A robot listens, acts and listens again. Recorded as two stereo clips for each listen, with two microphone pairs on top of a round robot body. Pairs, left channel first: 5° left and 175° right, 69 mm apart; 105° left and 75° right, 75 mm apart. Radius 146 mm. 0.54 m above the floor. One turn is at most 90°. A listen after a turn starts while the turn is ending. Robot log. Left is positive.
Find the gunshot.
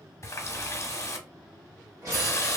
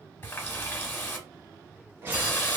note: The gunshot: 140° right.
cmd yaw -90
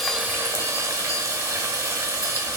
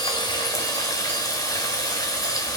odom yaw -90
note: Nothing new. It was at 50° right.
cmd yaw -50
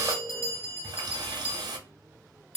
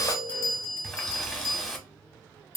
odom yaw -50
end: I heard a gunshot from this way, but can't make it out now.